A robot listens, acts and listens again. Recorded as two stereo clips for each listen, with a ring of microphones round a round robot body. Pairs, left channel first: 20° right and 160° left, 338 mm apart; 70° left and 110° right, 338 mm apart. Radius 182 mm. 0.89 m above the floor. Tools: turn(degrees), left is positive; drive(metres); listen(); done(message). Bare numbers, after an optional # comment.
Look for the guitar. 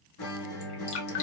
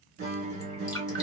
# The guitar: 50° right.
turn(-50)
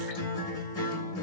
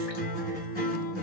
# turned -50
done("Found it: a guitar, straight ahead, 2 to 4 m away.")